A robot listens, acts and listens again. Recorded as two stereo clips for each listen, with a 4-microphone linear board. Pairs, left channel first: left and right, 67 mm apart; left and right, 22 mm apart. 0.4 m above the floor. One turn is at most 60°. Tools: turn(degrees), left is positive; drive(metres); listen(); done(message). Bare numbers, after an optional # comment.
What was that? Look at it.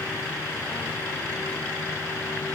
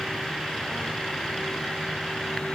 listen()
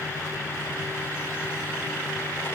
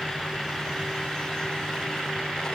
listen()
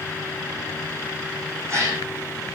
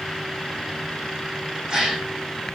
# The gasp: about 40° right or 140° right.
turn(-40)
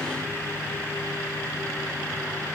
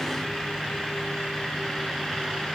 listen()
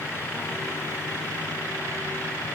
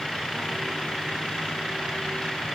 done("I heard a gasp, but can't make it out now. It was about straight ahead or 100° right.")